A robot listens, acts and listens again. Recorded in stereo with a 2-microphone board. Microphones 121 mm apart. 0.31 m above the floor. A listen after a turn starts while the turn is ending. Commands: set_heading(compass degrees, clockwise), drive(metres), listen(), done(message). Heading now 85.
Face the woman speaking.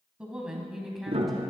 set_heading(55)
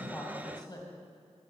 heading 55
set_heading(275)
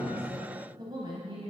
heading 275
set_heading(325)
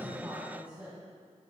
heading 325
set_heading(340)
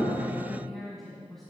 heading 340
done("Facing the woman speaking.")